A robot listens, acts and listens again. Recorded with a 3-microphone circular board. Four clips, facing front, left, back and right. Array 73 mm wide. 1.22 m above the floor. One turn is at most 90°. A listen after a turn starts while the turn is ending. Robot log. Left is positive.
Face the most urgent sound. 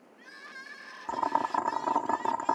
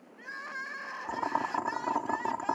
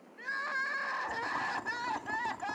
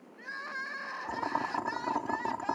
note: The crying: 175° left.
cmd yaw +90
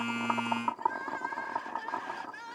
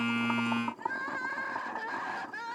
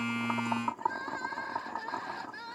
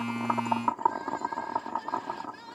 note: The crying is now 100° left.
cmd yaw +90
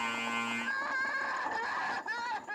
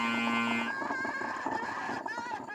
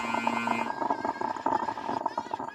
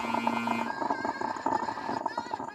note: The crying is now 15° left.
cmd yaw +15
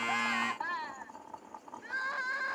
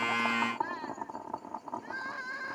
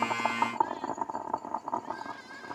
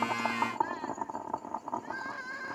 end: Facing the crying.